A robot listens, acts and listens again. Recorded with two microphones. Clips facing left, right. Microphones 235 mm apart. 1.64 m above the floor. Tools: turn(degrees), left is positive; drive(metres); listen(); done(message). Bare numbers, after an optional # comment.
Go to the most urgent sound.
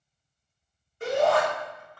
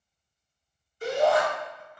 # The shout: about 60° left or 120° left.
turn(60)
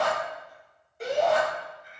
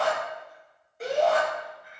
drive(1.0)
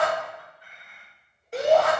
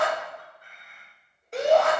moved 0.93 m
drive(1.0)
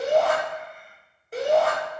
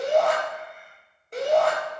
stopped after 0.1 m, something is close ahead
done("Arrived at the shout, straight ahead.")